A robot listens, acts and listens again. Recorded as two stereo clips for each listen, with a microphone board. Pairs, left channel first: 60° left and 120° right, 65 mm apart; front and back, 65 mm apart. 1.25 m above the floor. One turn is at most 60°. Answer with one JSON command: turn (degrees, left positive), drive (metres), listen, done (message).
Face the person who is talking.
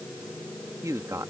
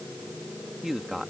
{"turn": -60}
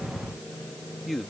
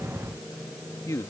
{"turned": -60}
{"turn": -30}
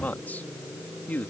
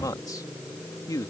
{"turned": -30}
{"done": "Facing the man speaking."}